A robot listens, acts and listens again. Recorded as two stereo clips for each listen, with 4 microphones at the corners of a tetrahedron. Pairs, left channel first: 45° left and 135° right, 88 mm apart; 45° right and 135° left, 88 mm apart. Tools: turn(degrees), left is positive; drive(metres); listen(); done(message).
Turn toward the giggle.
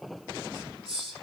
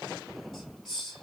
listen()
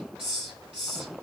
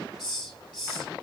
listen()
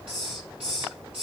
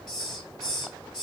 done("I can't make out a giggle to turn to.")